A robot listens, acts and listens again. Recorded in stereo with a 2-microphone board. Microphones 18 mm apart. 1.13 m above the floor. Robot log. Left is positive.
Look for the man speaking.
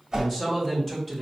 note: The man speaking: about 20° left or 160° left.
cmd yaw +20
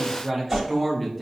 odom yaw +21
cmd yaw +30
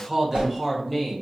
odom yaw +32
cmd yaw +30
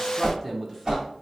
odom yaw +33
end: Found it: a man speaking, straight ahead, 1 to 2 m away.